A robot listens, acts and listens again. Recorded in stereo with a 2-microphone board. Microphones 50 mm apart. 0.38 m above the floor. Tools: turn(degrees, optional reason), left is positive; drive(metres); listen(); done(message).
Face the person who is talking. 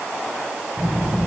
turn(degrees=-35, reason="The child speaking: about 35° right or 145° right.")
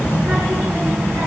turn(degrees=-120, reason="So it is at 120° right.")
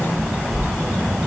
done("Found it: a child speaking, straight ahead.")